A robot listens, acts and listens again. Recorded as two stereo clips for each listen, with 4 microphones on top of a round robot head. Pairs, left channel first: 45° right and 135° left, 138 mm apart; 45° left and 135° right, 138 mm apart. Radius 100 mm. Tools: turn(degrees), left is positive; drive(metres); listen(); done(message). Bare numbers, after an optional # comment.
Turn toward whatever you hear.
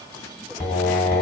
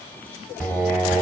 # The singing: 40° right.
turn(-40)
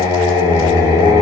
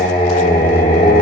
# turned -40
done("Facing the singing.")